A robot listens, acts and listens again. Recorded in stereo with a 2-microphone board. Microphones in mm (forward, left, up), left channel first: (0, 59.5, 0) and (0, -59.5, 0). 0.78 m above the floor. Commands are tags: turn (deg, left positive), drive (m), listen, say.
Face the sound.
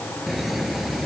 <turn deg="30"/>
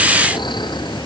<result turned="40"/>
<turn deg="140"/>
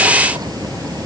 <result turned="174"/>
<turn deg="-35"/>
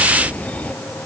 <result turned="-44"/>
<turn deg="10"/>
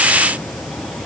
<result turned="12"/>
<say>Found it: laughter, straight ahead.</say>